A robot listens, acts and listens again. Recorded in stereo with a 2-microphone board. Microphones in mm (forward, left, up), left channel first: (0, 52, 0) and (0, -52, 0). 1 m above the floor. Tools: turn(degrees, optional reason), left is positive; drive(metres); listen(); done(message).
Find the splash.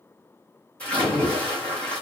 turn(degrees=30)
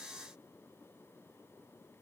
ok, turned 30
listen()
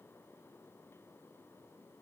done("I heard a splash, but can't make it out now. It was about 20° right or 140° left.")